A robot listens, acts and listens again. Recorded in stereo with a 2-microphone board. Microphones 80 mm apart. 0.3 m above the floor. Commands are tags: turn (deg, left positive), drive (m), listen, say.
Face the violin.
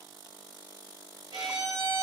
<turn deg="-70"/>
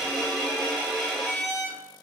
<say>Facing the violin.</say>